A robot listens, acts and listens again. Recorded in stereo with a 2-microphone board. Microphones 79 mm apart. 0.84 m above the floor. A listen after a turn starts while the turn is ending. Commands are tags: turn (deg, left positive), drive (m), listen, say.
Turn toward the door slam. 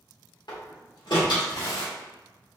<turn deg="65"/>
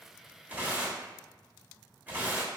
<listen/>
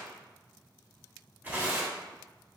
<say>I heard a door slam, but can't make it out now. It was about straight ahead or 50° left.</say>